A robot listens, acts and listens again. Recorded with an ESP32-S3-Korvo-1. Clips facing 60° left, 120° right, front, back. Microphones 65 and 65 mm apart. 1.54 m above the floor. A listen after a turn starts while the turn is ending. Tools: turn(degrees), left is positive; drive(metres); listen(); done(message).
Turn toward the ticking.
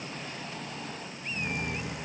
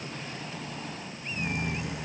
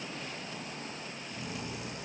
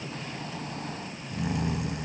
listen()
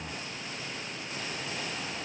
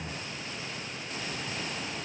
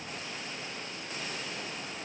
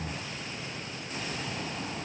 listen()
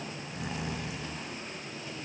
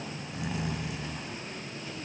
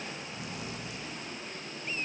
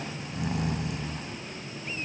done("I can't make out ticking to turn to.")